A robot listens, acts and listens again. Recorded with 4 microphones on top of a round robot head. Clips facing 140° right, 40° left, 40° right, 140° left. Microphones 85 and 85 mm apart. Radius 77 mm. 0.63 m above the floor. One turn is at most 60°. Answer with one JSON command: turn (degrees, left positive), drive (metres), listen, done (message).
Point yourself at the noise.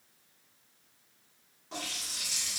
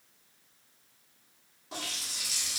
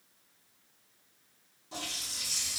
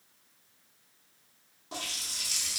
{"turn": 60}
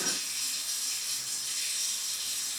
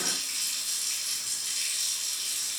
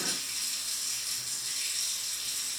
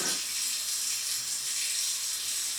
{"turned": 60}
{"turn": 40}
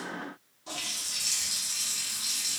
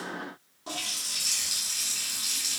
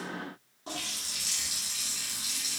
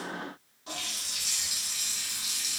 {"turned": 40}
{"done": "Facing the running tap."}